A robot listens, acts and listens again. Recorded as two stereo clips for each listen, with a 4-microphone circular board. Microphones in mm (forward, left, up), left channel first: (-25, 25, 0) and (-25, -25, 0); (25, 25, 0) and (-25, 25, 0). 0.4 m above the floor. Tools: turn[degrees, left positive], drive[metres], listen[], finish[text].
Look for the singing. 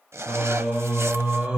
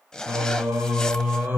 Thought: The singing: 155° right.
Action: turn[-155]
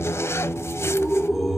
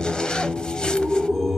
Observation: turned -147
Thought: The singing is now 65° right.
Action: turn[-65]
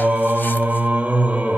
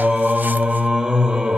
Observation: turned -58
Thought: The singing is now 120° right.
Action: turn[-120]
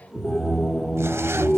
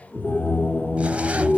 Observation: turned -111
Thought: The singing is now 10° right.
Action: turn[-10]
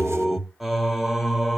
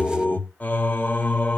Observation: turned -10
Action: finish[Facing the singing.]